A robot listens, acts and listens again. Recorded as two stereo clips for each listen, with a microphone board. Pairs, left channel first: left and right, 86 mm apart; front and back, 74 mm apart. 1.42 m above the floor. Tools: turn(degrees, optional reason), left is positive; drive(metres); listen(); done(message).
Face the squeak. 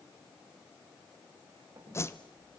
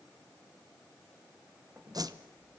turn(degrees=-125, reason="The squeak: 125° right.")
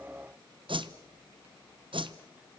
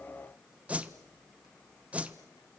listen()
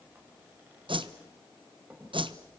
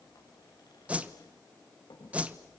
turn(degrees=-20, reason="The squeak is now 20° right.")
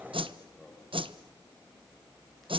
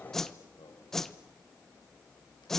done("Found it: a squeak, straight ahead.")